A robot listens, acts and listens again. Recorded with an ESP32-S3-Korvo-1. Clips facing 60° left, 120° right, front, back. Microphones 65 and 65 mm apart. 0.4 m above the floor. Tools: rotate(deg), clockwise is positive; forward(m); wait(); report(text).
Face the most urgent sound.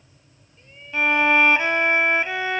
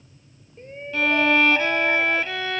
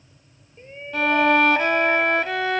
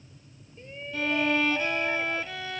rotate(65)
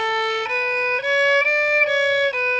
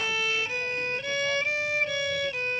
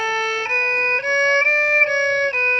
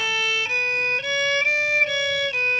wait()
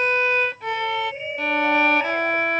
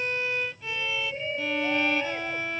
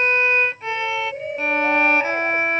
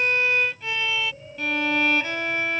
rotate(10)
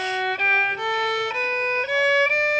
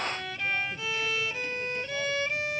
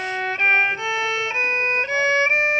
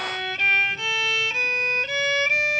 wait()
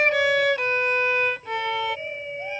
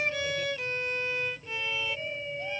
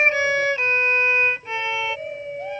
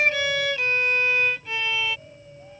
report("Found it: a shout, straight ahead.")